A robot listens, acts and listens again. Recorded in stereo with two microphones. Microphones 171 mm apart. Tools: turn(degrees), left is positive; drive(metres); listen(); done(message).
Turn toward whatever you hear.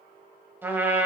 turn(degrees=-30)
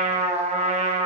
turn(degrees=-135)
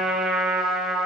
done("Found it: a trumpet, straight ahead, 1 to 2 m away.")